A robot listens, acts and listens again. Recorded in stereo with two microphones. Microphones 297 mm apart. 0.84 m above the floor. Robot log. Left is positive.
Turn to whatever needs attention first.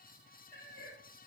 cmd idle
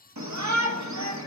note: The shout: about 70° right or 110° right.
cmd yaw -70
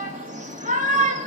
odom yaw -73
note: So it is at 25° right.
cmd yaw -25
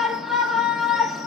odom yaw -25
end: Facing the shout.